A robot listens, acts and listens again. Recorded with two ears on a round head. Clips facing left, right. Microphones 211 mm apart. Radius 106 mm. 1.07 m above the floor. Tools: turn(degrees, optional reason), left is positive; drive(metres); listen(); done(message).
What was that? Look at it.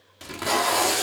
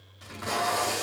turn(degrees=75, reason="The tape being pulled: about 75° left or 105° left.")
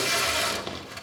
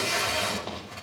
turn(degrees=25, reason="So it is at 25° left.")
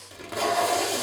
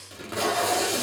turn(degrees=-10, reason="The tape being pulled is now 10° right.")
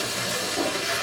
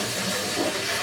done("Found it: tape being pulled, straight ahead.")